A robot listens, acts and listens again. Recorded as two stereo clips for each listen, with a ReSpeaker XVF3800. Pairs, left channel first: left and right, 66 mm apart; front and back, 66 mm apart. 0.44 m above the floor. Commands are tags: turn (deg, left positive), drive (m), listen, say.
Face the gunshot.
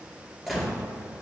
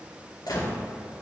<say>Found it: a gunshot, straight ahead.</say>